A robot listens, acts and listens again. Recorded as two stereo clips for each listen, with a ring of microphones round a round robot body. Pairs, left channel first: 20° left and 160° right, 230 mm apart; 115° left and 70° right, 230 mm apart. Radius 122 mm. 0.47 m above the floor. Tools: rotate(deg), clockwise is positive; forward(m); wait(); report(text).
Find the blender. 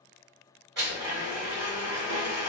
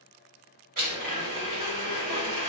rotate(115)
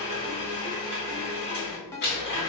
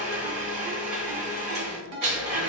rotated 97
rotate(20)
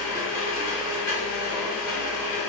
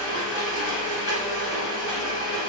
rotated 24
report("Found it: a blender, straight ahead.")